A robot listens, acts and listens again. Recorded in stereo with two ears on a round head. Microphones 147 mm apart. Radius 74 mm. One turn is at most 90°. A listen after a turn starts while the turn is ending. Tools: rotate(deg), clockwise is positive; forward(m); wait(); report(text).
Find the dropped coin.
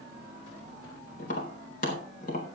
wait()
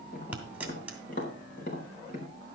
rotate(30)
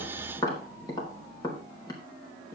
wait()
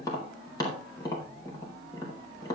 report("I heard a dropped coin, but can't make it out now. It was about 20° left or 140° right.")